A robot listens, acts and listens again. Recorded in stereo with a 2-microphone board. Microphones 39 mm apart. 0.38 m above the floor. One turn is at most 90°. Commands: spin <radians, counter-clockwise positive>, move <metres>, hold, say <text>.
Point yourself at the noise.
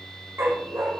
spin -1.57
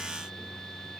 hold
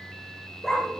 say Found it: a dog barking, straight ahead, over 4 m away.